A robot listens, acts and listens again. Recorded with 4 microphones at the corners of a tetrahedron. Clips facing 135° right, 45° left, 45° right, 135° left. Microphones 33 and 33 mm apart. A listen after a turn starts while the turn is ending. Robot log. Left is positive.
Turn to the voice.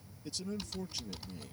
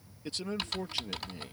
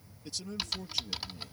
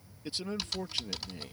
note: The man speaking: 95° left.
cmd yaw +95
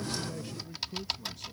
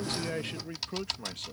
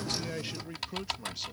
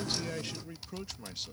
note: The man speaking is now 40° left.
cmd yaw +40
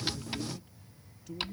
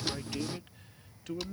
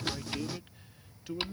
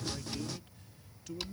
note: The man speaking is now 20° left.
cmd yaw +20
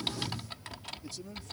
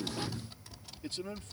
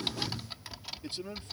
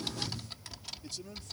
note: The man speaking is now 10° left.
cmd yaw +10
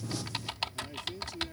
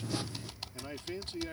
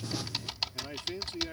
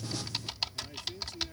end: Found it: a man speaking, straight ahead.